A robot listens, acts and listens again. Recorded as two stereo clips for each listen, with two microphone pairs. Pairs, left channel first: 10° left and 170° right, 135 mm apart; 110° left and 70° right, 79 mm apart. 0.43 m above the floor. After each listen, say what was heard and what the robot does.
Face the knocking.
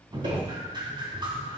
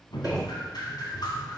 The knocking: 155° right. Turn 155° right.
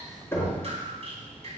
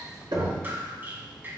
The knocking is now 60° right. Turn 60° right.
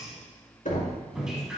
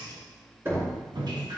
The knocking is now 10° right. Turn 10° right.
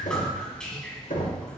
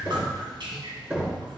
Found it: knocking, straight ahead.